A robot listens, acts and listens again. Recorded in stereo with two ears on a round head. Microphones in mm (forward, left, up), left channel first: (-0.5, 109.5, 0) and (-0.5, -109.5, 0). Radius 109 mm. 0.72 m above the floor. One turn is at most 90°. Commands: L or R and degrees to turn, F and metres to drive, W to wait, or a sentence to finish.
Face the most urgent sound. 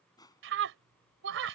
R55
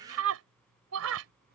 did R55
R70
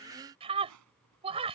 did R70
R25
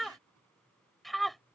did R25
Found it: a scream, straight ahead.